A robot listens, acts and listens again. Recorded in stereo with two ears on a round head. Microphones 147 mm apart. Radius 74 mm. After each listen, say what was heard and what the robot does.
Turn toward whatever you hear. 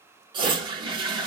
The toilet flushing: about 30° right or 150° right. Turn 30° right.
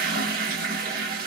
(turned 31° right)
So it is at 115° right. Turn 115° right.
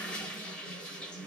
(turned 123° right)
Facing the toilet flushing, under 1 m away.